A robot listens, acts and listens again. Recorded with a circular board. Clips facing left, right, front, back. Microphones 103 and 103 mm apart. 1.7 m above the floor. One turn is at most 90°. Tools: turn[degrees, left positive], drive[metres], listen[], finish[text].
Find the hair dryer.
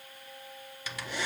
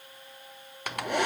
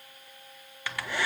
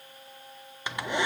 Thought: The hair dryer: 110° right.
Action: turn[-90]
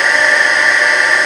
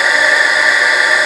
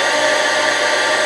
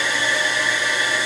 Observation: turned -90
Action: finish[Found it: a hair dryer, straight ahead, 1 to 2 m away.]